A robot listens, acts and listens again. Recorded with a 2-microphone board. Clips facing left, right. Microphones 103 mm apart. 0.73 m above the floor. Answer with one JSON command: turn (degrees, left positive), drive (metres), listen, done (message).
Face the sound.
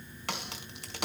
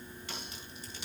{"turn": 90}
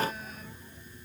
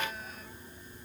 {"done": "I heard a crack from this way, but can't make it out now."}